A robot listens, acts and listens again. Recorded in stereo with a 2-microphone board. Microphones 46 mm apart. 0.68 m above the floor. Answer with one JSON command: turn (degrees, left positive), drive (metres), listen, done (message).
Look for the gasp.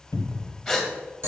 {"turn": 30}
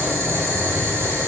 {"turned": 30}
{"listen": true}
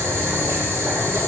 {"done": "I heard a gasp, but can't make it out now. It was about 30° right or 150° left."}